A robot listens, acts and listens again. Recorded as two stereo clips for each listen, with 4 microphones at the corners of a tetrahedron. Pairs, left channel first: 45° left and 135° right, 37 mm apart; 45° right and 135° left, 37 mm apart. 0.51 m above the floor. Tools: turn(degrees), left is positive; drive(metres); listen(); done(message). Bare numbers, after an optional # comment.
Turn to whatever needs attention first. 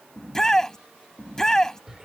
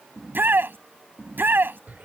# The shout: 120° left.
turn(120)
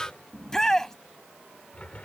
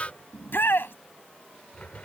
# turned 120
# The shout is now 30° right.
turn(-30)
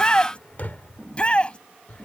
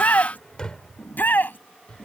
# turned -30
# The shout is now 15° right.
turn(-15)
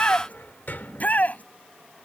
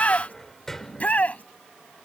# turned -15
done("Facing the shout.")